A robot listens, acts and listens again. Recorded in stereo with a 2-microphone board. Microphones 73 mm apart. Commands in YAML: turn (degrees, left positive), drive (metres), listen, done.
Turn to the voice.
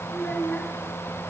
turn: 15
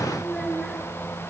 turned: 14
done: "Found it: a child speaking, straight ahead."